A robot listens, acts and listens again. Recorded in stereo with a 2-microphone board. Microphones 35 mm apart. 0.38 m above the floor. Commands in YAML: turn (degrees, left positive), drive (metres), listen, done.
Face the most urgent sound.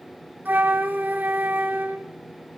listen: true
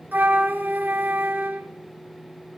listen: true
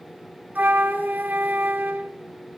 done: "I can't make out anything urgent, only a flute."